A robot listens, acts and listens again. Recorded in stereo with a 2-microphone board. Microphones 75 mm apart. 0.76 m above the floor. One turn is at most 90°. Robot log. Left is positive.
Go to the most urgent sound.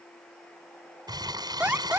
note: The alarm: about 25° right or 155° right.
cmd yaw -25
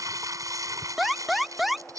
cmd fwd 1.0
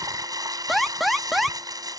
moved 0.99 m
cmd fwd 1.0
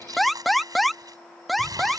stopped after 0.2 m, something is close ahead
end: I am next to the alarm.